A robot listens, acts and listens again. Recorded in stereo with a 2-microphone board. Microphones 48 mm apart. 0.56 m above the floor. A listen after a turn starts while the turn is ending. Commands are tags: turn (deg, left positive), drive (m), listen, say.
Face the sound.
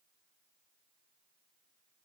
<listen/>
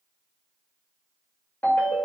<turn deg="60"/>
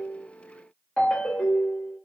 <turn deg="35"/>
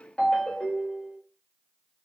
<turn deg="20"/>
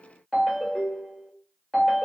<say>Found it: a ringtone, straight ahead.</say>